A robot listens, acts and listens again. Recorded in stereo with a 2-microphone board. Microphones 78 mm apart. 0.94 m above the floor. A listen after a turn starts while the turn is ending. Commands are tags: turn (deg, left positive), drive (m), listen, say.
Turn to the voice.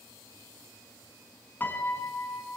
<listen/>
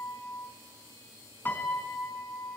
<listen/>
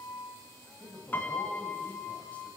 <turn deg="20"/>
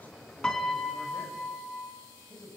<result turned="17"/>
<turn deg="145"/>
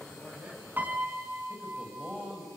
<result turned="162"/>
<turn deg="-20"/>
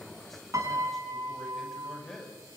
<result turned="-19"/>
<say>Facing the man speaking, over 4 m away.</say>